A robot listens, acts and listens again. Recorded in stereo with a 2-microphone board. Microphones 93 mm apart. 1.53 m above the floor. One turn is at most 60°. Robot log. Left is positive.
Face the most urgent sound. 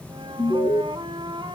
note: The alarm: about 75° left or 105° left.
cmd yaw +60
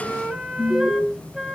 note: So it is at 20° left.
cmd yaw +20
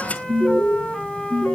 end: Facing the alarm.